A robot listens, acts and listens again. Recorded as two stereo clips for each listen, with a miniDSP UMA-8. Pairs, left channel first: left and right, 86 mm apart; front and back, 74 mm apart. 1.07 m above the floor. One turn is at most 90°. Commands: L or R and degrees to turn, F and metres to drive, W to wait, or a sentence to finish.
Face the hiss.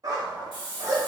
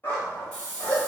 L75
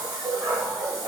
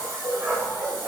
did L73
Found it: a hiss, straight ahead.